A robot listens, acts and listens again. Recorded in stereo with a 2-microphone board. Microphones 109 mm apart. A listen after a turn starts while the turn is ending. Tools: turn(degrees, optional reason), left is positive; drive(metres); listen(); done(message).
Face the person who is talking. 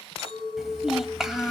turn(degrees=-30)
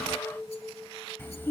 turn(degrees=25, reason="So it is at 25° left.")
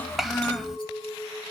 done("Found it: a child speaking, straight ahead, 1 to 2 m away.")